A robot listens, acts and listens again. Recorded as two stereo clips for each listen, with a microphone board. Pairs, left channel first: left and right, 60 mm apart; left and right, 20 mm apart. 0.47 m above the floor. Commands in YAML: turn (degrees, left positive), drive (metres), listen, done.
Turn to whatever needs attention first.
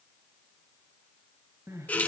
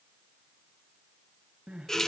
turn: -55
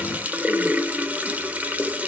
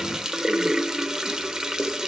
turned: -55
listen: true
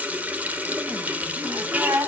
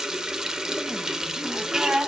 turn: -70
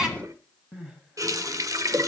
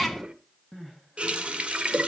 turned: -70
turn: -15
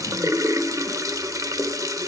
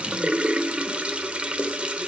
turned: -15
listen: true
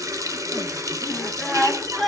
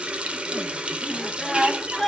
done: "Facing the crying."